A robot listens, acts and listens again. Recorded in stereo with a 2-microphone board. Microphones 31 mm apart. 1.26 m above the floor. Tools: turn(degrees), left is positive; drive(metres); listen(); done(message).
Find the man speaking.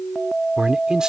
turn(degrees=-25)
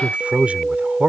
turn(degrees=-140)
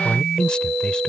turn(degrees=25)
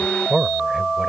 turn(degrees=-10)
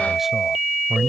done("Found it: a man speaking, straight ahead.")